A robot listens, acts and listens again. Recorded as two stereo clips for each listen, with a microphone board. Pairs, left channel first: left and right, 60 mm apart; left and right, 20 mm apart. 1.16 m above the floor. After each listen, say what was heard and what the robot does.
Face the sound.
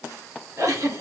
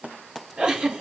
The giggle: about 60° right or 120° right. Turn 60° right.
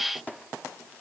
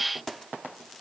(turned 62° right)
Keep listening.
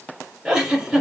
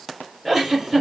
So it is at 15° right. Turn 15° right.
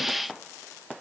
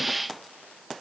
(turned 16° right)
Keep listening.
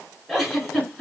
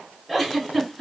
Facing the giggle, 2 to 4 m away.